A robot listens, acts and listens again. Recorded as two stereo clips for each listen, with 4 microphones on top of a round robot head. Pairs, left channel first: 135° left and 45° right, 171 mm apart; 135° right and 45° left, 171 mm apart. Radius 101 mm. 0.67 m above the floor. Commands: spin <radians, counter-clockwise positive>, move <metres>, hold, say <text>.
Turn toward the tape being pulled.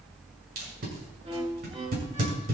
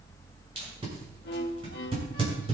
spin -0.17
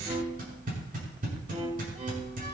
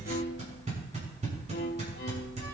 say Facing the tape being pulled.